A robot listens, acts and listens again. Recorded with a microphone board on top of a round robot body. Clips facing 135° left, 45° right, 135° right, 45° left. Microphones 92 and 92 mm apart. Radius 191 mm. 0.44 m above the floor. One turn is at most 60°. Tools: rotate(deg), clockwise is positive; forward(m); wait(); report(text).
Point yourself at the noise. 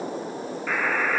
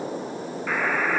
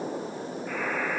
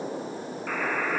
rotate(-40)
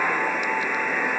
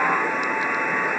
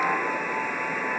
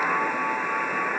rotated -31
rotate(-10)
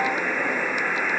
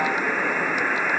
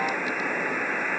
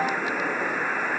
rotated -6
report("Found it: a buzzer, straight ahead.")